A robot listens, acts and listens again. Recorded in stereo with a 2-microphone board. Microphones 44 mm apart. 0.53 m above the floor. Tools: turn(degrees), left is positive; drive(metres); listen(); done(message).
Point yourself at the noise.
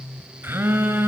turn(degrees=-65)
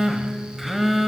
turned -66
done("Facing the phone buzzing, 2 to 4 m away.")